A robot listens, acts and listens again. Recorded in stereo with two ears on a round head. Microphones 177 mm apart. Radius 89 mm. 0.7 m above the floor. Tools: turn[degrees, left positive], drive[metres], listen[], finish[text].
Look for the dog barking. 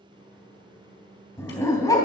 Thought: The dog barking: about 20° left or 160° left.
Action: turn[20]
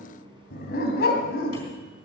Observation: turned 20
Thought: So it is at 120° left.
Action: turn[120]
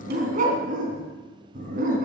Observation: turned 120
Thought: The dog barking is now 45° right.
Action: turn[-45]
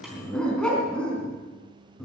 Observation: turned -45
Action: finish[Found it: a dog barking, straight ahead, 2 to 4 m away.]